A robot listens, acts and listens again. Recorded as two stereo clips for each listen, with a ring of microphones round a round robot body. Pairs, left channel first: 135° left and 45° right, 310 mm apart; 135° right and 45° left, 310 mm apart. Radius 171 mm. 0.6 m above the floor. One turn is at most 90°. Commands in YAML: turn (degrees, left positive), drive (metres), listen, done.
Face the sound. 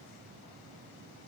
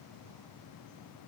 listen: true
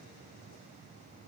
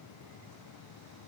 listen: true
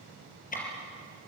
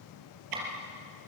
turn: 70
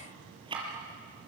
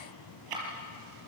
turn: 30
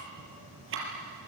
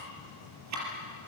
done: "Facing the ticking."